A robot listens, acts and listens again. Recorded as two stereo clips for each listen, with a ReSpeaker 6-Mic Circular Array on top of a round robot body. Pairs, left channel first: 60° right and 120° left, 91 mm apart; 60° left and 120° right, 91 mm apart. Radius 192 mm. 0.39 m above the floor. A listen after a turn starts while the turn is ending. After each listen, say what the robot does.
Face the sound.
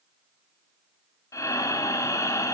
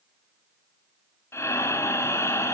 Found it: breathing, straight ahead, 1 to 2 m away.